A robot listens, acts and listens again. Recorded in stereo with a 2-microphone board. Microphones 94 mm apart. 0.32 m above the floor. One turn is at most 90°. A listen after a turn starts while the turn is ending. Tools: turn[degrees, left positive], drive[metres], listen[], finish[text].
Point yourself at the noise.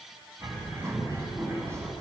Thought: The bird: about 35° right or 145° right.
Action: turn[-35]
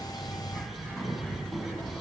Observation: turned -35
Action: finish[Facing the bird.]